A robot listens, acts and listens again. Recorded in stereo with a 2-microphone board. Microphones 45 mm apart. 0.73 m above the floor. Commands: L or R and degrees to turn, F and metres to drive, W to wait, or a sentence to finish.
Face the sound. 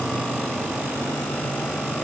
W
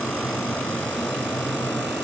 W
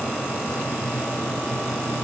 I can't make out anything to turn to.